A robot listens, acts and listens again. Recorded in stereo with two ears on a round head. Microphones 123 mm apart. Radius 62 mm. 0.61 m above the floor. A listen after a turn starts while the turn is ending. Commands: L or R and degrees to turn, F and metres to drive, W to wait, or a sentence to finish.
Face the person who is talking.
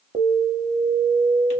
W
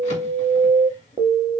W
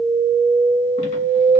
I can't make out anyone speaking to turn to.